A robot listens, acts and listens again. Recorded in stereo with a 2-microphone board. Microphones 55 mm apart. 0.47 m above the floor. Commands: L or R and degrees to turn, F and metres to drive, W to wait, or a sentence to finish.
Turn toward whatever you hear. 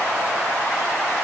W
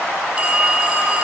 R20
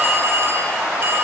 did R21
R135
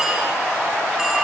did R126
R10
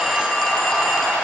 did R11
W
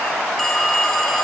Facing the phone ringing.